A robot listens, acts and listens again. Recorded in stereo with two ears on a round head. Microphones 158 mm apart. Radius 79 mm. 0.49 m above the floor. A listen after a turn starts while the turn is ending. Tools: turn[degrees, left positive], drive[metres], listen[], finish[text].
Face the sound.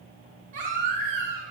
Thought: The baby crying: about 50° right or 130° right.
Action: turn[-50]
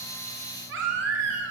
Thought: So it is at 80° right.
Action: turn[-80]
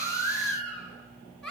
Action: finish[Found it: a baby crying, straight ahead, 2 to 4 m away.]